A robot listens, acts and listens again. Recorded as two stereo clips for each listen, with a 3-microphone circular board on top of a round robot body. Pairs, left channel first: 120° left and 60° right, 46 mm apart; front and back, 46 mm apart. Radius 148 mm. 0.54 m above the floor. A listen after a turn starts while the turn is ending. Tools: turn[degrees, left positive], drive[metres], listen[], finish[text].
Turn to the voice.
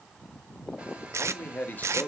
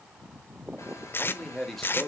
Thought: The man speaking: 85° left.
Action: turn[85]
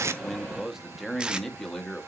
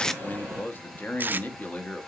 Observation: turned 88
Thought: The man speaking is now 45° left.
Action: turn[45]
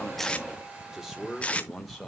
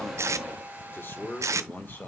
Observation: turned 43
Thought: The man speaking is now 30° left.
Action: turn[30]
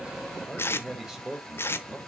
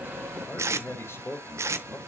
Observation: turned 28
Thought: The man speaking is now 10° left.
Action: turn[10]
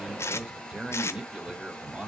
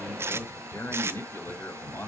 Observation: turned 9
Action: finish[Facing the man speaking.]